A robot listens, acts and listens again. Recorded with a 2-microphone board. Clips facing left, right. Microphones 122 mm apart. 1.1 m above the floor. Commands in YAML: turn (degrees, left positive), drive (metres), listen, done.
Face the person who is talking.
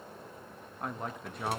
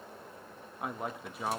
turn: -30
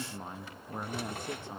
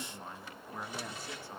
turn: 20
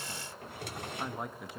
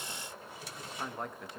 done: "Found it: a man speaking, straight ahead."